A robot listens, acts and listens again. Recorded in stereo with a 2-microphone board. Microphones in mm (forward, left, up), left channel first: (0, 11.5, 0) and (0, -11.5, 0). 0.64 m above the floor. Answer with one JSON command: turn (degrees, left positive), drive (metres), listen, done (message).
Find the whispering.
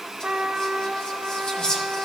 {"turn": 35}
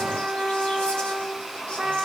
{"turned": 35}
{"listen": true}
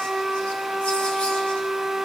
{"listen": true}
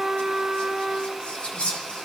{"turn": 100}
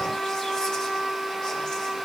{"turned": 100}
{"listen": true}
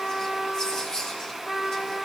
{"turn": 35}
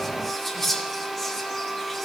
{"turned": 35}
{"turn": 15}
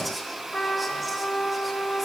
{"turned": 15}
{"listen": true}
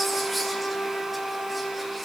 {"listen": true}
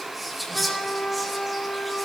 {"done": "Facing the whispering."}